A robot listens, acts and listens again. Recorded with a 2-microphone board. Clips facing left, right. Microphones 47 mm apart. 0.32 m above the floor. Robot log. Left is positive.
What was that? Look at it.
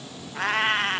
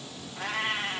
note: The cat meowing: about 65° left or 115° left.
cmd yaw +65
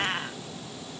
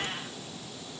note: So it is at 55° left.
cmd yaw +55
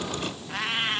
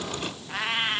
end: Found it: a cat meowing, straight ahead.